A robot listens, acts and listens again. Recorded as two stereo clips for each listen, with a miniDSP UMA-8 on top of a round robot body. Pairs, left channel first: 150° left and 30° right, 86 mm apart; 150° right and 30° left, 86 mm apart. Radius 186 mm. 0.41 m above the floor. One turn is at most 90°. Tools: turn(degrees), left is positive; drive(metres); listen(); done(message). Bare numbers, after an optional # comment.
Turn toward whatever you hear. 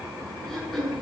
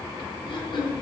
# The throat clearing: 120° right.
turn(-90)
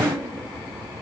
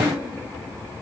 # Nothing new. It was at 30° right.
turn(-30)
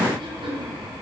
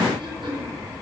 done("Facing the throat clearing, over 4 m away.")